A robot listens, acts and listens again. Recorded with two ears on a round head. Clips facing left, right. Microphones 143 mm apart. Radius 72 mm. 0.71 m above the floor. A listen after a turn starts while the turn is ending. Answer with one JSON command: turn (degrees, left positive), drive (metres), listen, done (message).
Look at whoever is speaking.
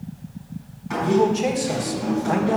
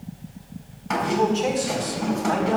{"turn": 30}
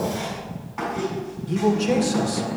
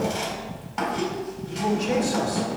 {"turn": 135}
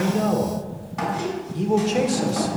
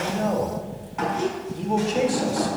{"turn": 45}
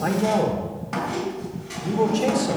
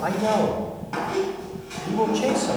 {"turn": 20}
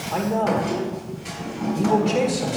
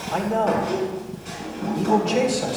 {"done": "Found it: a man speaking, straight ahead, 1 to 2 m away."}